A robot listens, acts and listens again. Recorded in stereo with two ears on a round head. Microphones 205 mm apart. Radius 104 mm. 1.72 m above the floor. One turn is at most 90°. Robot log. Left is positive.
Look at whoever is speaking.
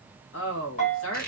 note: The woman speaking: about 60° left or 120° left.
cmd yaw +60
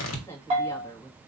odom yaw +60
note: So it is at 10° left.
cmd yaw +10
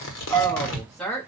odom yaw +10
end: Facing the woman speaking, 1 to 2 m away.